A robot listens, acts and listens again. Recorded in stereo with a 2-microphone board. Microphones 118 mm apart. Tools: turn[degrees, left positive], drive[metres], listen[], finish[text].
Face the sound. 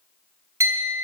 Thought: The clink: about 30° right or 150° right.
Action: turn[-30]
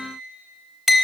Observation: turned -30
Action: finish[Found it: a clink, straight ahead, under 1 m away.]